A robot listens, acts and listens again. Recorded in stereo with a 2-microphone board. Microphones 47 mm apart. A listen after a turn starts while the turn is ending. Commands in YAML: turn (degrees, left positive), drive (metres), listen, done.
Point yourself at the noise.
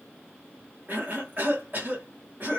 turn: -40
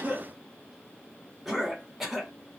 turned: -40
done: "Found it: a cough, straight ahead, 1 to 2 m away."